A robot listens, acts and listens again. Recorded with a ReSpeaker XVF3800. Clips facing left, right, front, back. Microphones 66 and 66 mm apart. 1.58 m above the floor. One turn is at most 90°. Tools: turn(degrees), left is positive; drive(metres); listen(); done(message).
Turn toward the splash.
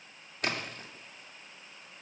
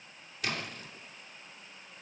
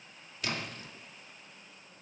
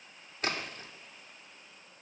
turn(degrees=90)
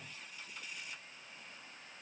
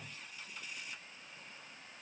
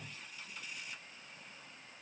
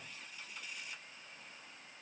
turn(degrees=40)
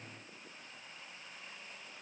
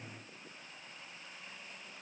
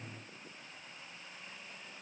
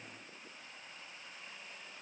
done("I heard a splash from this way, but can't make it out now.")